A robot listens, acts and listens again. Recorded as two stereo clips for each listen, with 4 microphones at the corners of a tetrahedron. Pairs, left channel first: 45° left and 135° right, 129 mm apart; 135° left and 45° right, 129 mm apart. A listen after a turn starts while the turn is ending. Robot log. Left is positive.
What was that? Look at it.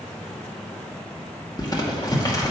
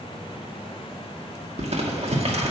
note: The crumpling: 10° right.
cmd yaw -10
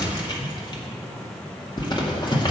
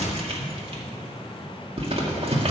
end: Found it: crumpling, straight ahead, 1 to 2 m away.